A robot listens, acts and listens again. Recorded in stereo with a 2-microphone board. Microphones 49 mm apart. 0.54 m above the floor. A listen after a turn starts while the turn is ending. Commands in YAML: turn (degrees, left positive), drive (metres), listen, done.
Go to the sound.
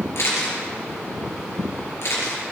turn: 60
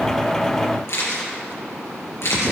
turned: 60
turn: 60
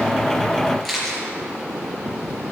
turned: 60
drive: 1.0
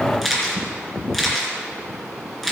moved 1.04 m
drive: 1.0
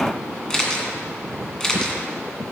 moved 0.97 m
turn: 15
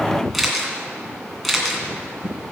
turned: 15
drive: 1.0
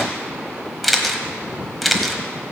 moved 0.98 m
drive: 1.0
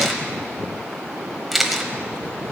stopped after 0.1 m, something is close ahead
done: "I am next to the camera shutter."